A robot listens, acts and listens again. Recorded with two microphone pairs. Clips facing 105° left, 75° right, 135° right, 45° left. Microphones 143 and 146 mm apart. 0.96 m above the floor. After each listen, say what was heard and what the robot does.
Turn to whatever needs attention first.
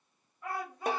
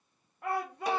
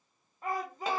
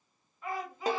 The shout: 90° right. Turn 90° right.
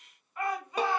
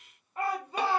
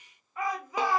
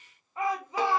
The shout is now 15° right. Turn 15° right.
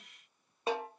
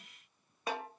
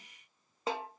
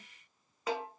Keep listening.
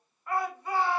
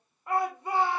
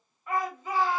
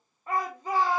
Found it: a shout, straight ahead.